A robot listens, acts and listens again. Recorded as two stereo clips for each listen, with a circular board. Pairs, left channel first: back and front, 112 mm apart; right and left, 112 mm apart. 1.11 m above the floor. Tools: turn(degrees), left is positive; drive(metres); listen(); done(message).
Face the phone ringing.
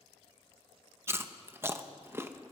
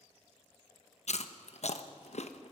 listen()
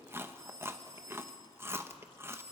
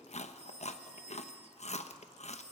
turn(degrees=60)
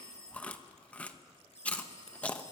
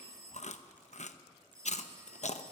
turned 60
turn(degrees=30)
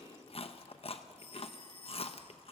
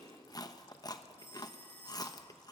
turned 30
turn(degrees=-15)
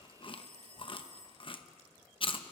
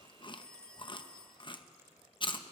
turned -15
turn(degrees=-10)
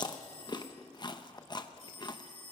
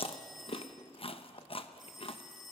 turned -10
done("Found it: a phone ringing, straight ahead, 1 to 2 m away.")